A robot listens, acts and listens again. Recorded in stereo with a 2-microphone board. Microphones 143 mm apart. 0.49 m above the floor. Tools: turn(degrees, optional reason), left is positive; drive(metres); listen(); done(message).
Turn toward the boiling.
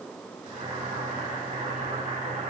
turn(degrees=-65, reason="The boiling: about 65° right or 115° right.")
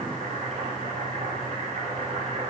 turn(degrees=-50, reason="So it is at 50° right.")
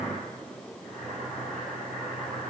done("Facing the boiling.")